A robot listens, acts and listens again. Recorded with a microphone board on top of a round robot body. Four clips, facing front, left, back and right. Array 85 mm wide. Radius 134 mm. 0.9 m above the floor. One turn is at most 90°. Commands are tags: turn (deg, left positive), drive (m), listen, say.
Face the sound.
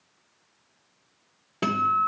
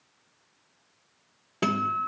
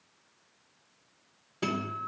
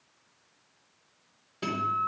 <turn deg="50"/>
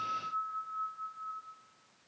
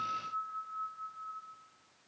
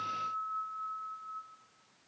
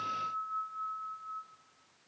<turn deg="25"/>
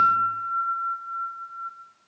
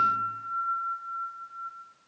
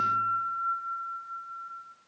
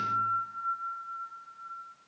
<say>Found it: a guitar, straight ahead.</say>